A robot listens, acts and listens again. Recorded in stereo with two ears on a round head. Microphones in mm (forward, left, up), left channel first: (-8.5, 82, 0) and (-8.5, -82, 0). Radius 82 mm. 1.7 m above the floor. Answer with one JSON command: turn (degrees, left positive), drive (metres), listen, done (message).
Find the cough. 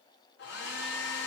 {"listen": true}
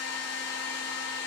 {"listen": true}
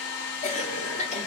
{"turn": 40}
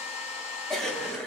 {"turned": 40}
{"done": "Facing the cough, under 1 m away."}